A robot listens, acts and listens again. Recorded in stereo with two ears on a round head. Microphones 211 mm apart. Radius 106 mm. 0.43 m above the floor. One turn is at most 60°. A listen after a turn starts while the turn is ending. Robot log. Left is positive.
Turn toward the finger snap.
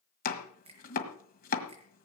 note: The finger snap: about 25° right or 155° right.
cmd yaw -25
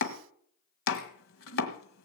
cmd idle
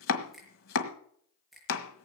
end: Facing the finger snap, over 4 m away.